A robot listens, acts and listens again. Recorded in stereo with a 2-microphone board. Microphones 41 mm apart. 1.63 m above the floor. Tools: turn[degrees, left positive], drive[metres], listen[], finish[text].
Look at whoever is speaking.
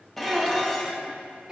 Thought: The child speaking: about 20° right or 160° right.
Action: turn[-20]
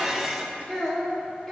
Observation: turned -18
Action: finish[Found it: a child speaking, straight ahead.]